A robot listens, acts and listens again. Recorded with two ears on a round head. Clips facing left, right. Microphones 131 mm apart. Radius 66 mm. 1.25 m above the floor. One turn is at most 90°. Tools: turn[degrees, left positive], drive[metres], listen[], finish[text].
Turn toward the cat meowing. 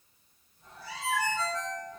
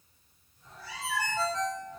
Action: turn[30]
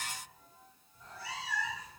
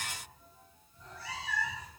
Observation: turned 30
Action: turn[30]
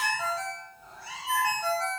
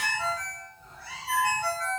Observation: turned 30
Action: turn[30]
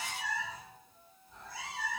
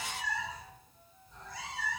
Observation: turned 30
Action: turn[30]
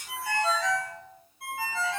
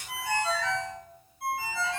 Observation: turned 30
Action: listen[]
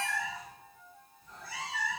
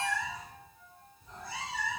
Thought: So it is at 20° right.
Action: turn[-20]
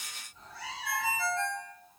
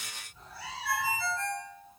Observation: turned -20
Thought: The cat meowing is now 10° right.
Action: turn[-10]
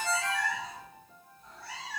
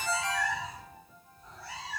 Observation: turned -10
Action: finish[Found it: a cat meowing, straight ahead.]